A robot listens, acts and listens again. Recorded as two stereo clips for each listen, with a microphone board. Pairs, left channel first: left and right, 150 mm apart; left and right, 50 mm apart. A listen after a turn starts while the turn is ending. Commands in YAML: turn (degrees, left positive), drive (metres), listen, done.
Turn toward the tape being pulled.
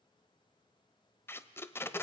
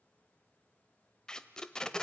turn: 15
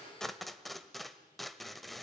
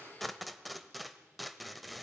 done: "Facing the tape being pulled."